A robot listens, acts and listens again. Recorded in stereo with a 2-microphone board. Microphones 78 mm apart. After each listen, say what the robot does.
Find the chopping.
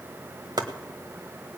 Turn 60° right.
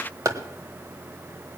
Turn 50° right.
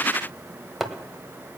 Found it: chopping, straight ahead, 1 to 2 m away.